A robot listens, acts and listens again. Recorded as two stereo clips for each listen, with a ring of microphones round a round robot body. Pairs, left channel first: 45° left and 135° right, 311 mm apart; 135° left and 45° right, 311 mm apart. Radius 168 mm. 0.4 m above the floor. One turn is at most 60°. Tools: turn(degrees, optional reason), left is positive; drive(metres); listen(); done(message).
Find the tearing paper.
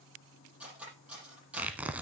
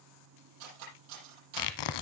turn(degrees=60, reason="The tearing paper: 140° left.")
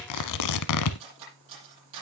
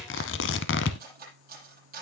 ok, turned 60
turn(degrees=60, reason="The tearing paper is now 80° left.")
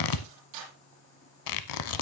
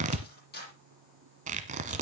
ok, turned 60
turn(degrees=25, reason="The tearing paper is now 25° left.")
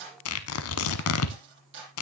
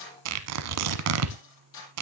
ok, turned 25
done("Facing the tearing paper, under 1 m away.")